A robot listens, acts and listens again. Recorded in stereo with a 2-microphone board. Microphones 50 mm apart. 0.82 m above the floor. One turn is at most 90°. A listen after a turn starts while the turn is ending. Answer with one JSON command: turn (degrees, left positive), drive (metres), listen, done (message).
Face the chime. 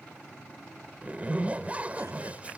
{"listen": true}
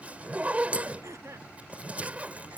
{"listen": true}
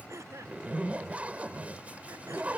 {"done": "I can't make out a chime, only throat clearing and a zipper."}